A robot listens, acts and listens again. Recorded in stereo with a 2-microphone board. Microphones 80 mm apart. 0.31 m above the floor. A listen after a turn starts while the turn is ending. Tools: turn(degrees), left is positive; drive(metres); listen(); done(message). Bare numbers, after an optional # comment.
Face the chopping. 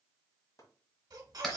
# The chopping: about 45° left or 135° left.
turn(45)
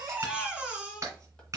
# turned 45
listen()
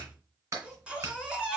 listen()
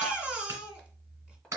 done("I heard chopping, but can't make it out now. It was about straight ahead or 90° left.")